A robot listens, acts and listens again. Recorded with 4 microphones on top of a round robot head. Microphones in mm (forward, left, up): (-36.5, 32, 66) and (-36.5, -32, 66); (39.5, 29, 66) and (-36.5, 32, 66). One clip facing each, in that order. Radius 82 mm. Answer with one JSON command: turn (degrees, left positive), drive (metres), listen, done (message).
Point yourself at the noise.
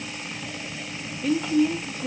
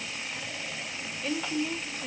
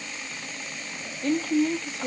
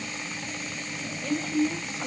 {"done": "Facing the woman speaking, 1 to 2 m away."}